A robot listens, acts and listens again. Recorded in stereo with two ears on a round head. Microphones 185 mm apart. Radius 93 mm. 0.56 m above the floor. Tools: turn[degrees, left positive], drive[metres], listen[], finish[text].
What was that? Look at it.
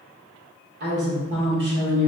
Thought: The woman speaking: about 55° right or 125° right.
Action: turn[-55]
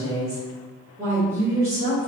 Thought: So it is at 20° right.
Action: turn[-20]
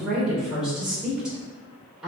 Action: finish[Found it: a woman speaking, straight ahead, 1 to 2 m away.]